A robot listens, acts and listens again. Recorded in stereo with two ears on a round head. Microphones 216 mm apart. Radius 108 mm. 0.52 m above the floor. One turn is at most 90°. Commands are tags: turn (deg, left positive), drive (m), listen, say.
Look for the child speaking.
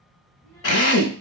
<turn deg="30"/>
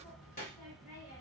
<turn deg="90"/>
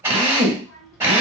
<turn deg="90"/>
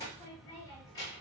<turn deg="20"/>
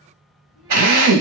<say>Found it: a child speaking, straight ahead, 1 to 2 m away.</say>